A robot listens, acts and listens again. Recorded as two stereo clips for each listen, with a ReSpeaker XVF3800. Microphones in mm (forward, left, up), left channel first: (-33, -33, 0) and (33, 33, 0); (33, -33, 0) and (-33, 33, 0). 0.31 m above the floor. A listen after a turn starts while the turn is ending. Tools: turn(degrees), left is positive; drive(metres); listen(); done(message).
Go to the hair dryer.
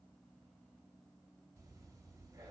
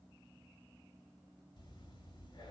listen()
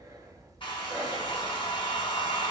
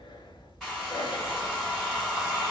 turn(degrees=-135)
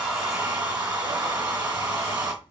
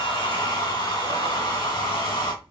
turn(degrees=-20)
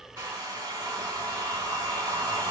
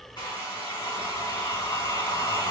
drive(metres=1.0)
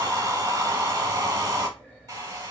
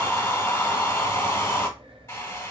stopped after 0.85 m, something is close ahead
done("I am next to the hair dryer.")